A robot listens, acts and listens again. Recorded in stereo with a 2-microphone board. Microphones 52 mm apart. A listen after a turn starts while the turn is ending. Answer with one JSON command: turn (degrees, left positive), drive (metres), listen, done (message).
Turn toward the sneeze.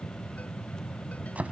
{"listen": true}
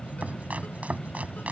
{"listen": true}
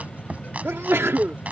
{"turn": -50}
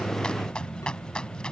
{"listen": true}
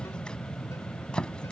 {"done": "I heard a sneeze, but can't make it out now. It was about straight ahead or 80° right."}